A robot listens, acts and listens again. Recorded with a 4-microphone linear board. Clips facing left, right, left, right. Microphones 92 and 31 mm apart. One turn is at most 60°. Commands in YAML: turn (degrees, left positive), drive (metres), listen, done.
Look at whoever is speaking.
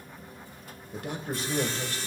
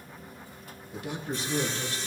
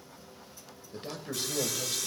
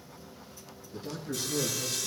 turn: 50
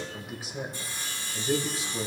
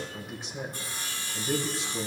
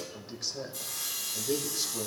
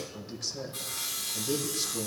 done: "Found it: a man speaking, straight ahead."